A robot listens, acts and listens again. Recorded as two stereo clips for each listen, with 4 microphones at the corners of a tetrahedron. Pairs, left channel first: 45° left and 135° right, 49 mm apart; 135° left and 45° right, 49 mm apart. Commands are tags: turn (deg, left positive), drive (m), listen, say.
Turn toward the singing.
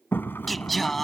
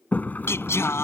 <turn deg="130"/>
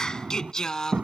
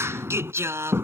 <turn deg="-35"/>
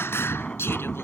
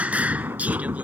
<turn deg="10"/>
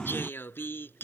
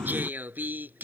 <say>Found it: singing, straight ahead.</say>